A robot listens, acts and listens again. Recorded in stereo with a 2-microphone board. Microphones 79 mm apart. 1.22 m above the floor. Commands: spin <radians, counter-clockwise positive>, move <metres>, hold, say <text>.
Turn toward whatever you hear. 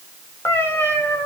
spin 0.52
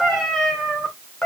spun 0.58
spin 0.26
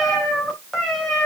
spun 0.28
say Found it: a cat meowing, straight ahead.